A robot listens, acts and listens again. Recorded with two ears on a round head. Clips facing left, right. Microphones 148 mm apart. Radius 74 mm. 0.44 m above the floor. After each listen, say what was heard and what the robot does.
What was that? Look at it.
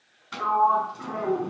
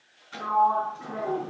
Turn 90° left.
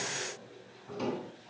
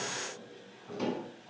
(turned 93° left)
Found it: a sliding door, straight ahead.